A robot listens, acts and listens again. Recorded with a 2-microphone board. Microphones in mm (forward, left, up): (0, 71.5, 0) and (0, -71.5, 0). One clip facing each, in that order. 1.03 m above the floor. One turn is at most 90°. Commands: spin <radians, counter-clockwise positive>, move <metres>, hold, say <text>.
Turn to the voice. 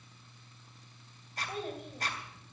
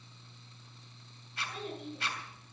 spin 0.87
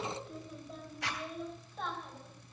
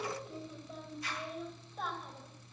say Facing the child speaking.